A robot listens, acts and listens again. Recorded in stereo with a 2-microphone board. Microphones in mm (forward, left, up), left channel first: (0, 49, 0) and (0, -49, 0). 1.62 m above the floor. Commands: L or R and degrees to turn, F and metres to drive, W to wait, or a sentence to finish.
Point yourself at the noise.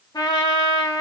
L40
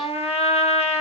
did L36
L105
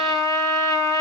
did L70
L35
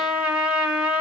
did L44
R10
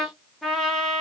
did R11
Facing the trumpet.